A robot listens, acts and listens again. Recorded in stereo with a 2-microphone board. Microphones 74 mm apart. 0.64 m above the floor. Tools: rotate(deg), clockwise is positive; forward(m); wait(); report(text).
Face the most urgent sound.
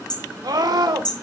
rotate(70)
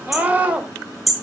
rotate(20)
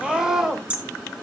report("Facing the scream, 2 to 4 m away.")